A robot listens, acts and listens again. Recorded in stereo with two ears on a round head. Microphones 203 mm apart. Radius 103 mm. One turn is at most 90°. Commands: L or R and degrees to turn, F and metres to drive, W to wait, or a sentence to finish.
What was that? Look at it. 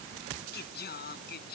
L45
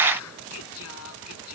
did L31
L90
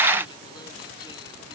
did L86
L15
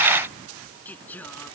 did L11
L10
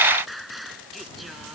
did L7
Found it: singing, straight ahead.